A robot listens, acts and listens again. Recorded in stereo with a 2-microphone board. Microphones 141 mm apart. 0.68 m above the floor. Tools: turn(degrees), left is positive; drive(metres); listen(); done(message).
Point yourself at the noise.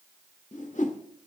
turn(degrees=60)
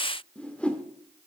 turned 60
turn(degrees=10)
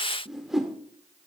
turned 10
done("Facing the whoosh, 1 to 2 m away.")